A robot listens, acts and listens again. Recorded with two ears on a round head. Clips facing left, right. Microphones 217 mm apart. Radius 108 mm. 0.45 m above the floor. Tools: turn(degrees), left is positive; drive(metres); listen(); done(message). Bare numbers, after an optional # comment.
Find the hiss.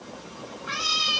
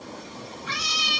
listen()
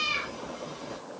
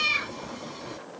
listen()
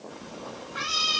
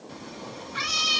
done("I can't make out a hiss, only a cat meowing.")